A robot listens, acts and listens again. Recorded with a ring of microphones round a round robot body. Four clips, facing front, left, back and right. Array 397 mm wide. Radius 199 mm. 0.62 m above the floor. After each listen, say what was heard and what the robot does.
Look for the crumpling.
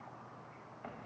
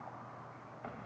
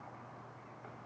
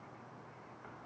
Keep listening.
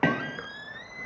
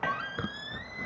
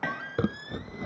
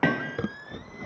The crumpling: 155° right. Turn 155° right.
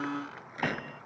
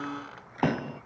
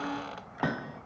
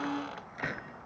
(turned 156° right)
Keep listening.
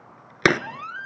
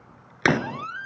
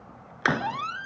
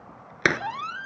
Found it: crumpling, straight ahead.